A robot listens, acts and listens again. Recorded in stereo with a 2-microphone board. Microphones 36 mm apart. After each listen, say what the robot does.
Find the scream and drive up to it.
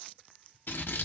Keep listening.
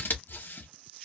Keep listening.
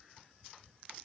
I can't make out a scream, only scissors.